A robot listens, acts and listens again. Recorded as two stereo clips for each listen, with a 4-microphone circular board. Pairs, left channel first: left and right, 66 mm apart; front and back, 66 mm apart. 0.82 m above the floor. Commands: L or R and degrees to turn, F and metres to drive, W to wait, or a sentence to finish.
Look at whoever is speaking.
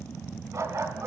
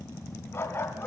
W
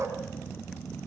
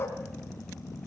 W
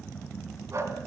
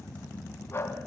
I can't make out anyone speaking, only a dog barking.